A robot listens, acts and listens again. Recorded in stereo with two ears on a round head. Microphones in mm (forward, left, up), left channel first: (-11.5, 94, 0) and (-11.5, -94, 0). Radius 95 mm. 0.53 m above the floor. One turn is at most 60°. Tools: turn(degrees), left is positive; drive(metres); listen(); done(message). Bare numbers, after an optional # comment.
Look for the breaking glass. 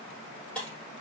turn(30)
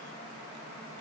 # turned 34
listen()
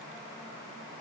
done("I heard breaking glass, but can't make it out now. It was about 30° right or 140° left.")